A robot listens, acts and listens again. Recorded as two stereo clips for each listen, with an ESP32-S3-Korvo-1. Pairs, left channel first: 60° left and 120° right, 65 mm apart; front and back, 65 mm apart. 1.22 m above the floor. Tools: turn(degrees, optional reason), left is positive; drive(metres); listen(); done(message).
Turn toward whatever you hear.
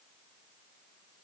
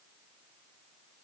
listen()
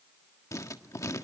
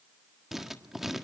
turn(degrees=95, reason="The writing: 95° left.")
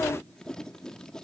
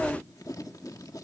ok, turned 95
turn(degrees=-20, reason="The writing is now 20° right.")
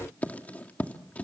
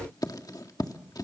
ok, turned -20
done("Facing the writing, 1 to 2 m away.")